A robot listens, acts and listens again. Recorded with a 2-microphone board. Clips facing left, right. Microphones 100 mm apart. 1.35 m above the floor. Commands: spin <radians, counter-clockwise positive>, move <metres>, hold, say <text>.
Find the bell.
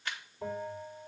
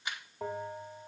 spin -1.57
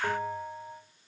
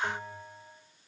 spin 0.17
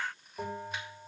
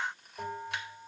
say Found it: a bell, straight ahead.